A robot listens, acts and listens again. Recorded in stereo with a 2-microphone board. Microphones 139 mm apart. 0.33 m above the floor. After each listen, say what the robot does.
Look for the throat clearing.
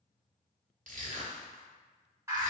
Keep listening.
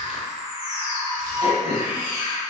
Turn 45° left.
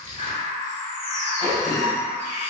Turn 15° left.
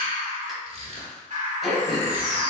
Facing the throat clearing.